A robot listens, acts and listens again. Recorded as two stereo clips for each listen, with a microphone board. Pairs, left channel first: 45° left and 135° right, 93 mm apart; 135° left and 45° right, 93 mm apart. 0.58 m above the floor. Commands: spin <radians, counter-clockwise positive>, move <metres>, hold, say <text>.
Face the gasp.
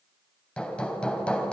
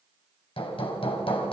hold
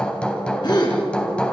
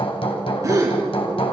spin 0.17
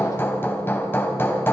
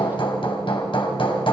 say I heard a gasp from this way, but can't make it out now.